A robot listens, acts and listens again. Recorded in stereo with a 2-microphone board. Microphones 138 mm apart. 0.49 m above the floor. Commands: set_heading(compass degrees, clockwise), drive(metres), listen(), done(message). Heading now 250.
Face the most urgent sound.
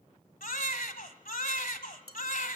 set_heading(160)
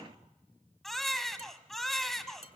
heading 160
done("Facing the baby crying.")